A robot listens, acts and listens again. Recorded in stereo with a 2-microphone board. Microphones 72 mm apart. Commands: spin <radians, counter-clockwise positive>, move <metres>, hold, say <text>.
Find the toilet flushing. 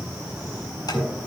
spin 0.35
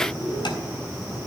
hold
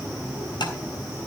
hold
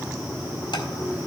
say I heard a toilet flushing, but can't make it out now. It was about straight ahead or 140° left.